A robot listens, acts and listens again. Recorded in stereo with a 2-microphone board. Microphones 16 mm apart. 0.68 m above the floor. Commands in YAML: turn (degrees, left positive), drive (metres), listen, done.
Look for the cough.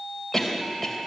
turn: 30
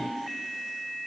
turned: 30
listen: true
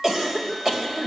turn: -25
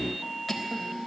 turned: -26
done: "Found it: a cough, straight ahead."